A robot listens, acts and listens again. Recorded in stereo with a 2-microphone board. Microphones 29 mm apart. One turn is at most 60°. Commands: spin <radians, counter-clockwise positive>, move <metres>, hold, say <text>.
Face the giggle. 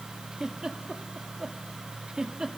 spin -0.44
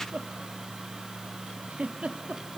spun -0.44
spin -1.05
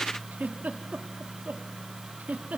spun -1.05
spin -1.05
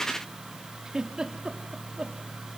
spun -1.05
spin -0.52
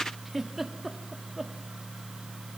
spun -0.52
say Facing the giggle, 2 to 4 m away.